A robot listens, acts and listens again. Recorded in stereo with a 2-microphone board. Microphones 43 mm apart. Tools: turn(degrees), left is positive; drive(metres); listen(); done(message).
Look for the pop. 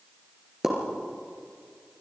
turn(degrees=-30)
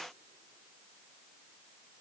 listen()
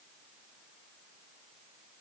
done("I heard a pop, but can't make it out now. It was about 20° left or 140° right.")